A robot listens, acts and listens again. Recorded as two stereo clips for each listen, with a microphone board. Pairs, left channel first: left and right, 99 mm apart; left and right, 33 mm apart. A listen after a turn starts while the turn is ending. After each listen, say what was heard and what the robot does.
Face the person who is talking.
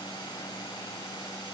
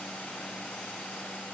Keep listening.
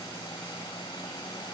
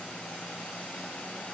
Keep listening.
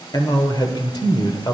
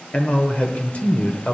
The man speaking: about 45° left or 135° left. Turn 45° left.
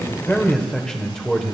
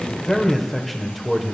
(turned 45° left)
So it is at 10° left. Turn 10° left.
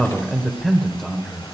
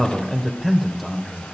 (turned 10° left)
Facing the man speaking, 1 to 2 m away.